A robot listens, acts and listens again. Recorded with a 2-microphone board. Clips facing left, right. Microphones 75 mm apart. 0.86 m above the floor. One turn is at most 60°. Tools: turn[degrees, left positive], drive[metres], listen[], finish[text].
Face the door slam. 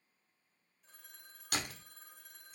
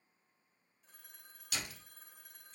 Thought: The door slam: about 50° left or 130° left.
Action: turn[50]
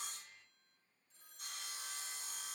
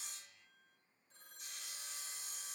Action: listen[]
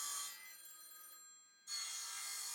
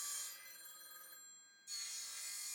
Action: finish[I heard a door slam, but can't make it out now. It was about straight ahead or 80° left.]